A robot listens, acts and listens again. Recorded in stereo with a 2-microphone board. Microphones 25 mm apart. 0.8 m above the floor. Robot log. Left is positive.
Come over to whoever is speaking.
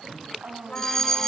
cmd yaw -90
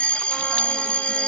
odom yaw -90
cmd idle
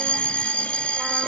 cmd idle
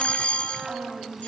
note: The woman speaking is now 15° right.
cmd yaw -15
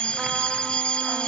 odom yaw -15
cmd idle
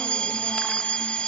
cmd idle
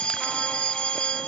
end: Facing where the woman speaking came from. I can't hear it now. I did not reach it.